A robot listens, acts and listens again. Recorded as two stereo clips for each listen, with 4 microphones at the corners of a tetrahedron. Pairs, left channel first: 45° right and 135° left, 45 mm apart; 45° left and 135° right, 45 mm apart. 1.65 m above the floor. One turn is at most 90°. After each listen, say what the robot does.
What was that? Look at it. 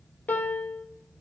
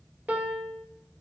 Turn 90° right.
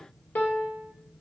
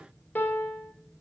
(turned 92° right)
Facing the piano.